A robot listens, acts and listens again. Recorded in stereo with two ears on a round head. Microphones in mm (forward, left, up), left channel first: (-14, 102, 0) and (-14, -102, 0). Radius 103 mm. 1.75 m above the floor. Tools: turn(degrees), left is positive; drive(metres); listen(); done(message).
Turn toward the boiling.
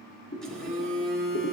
turn(degrees=40)
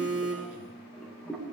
done("Found it: boiling, straight ahead, 2 to 4 m away.")